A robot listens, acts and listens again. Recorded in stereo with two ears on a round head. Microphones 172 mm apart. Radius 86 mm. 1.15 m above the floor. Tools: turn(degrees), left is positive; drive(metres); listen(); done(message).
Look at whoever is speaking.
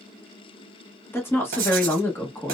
turn(degrees=30)
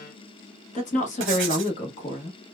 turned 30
turn(degrees=140)
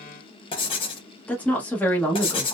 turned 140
turn(degrees=10)
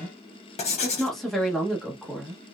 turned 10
done("Found it: a woman speaking, straight ahead, under 1 m away.")